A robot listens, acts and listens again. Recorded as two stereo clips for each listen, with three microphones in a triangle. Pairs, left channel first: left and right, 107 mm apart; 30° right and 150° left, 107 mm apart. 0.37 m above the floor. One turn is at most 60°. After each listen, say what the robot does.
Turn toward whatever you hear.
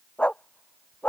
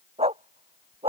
Turn 60° left.
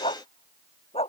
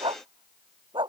Turn 60° left.
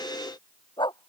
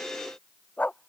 Turn 45° left.
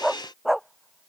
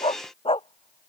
Found it: a dog barking, straight ahead.